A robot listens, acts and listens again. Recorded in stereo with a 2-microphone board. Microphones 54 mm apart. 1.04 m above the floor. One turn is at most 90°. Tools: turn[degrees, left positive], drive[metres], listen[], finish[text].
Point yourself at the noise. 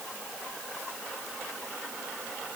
Action: listen[]
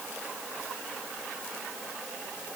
Action: listen[]
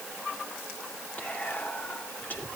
Thought: The whispering: about 30° left or 150° left.
Action: turn[30]
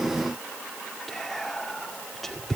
Action: finish[Found it: whispering, straight ahead.]